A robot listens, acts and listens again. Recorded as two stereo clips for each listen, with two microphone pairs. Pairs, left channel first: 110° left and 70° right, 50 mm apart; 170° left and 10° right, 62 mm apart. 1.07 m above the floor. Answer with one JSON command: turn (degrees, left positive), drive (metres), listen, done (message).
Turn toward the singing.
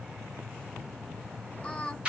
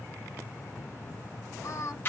{"turn": 170}
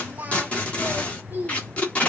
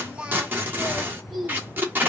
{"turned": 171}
{"turn": -105}
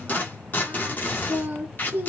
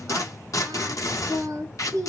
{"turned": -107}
{"turn": -20}
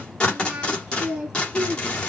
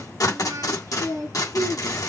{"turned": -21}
{"done": "Found it: singing, straight ahead, 1 to 2 m away."}